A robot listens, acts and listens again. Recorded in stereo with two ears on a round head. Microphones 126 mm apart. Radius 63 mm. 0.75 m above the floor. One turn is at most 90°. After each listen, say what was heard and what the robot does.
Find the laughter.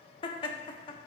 The laughter: about 35° left or 145° left. Turn 35° left.
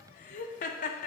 So it is at 110° left. Turn 90° left.
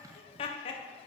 The laughter is now 45° left. Turn 45° left.
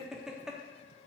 Found it: laughter, straight ahead, under 1 m away.